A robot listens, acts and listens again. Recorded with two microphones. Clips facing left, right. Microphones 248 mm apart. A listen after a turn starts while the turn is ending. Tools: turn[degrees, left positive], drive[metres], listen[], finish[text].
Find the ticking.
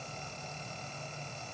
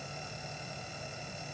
Action: listen[]
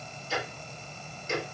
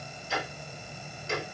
Thought: The ticking: about 65° right or 115° right.
Action: turn[-65]
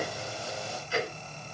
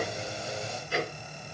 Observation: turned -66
Thought: So it is at 50° right.
Action: turn[-50]
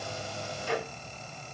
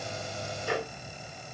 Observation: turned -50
Action: finish[Found it: ticking, straight ahead.]